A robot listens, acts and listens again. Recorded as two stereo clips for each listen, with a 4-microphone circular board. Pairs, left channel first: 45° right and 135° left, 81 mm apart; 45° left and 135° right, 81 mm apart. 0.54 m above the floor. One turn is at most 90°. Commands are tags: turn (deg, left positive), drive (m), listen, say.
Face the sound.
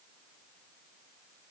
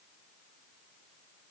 <listen/>
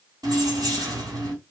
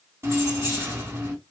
<turn deg="90"/>
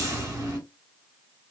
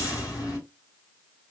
<turn deg="85"/>
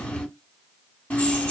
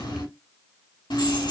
<turn deg="30"/>
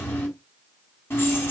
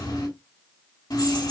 <turn deg="15"/>
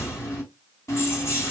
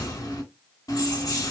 <turn deg="10"/>
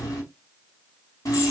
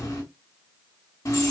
<say>Found it: keys jangling, straight ahead, 2 to 4 m away.</say>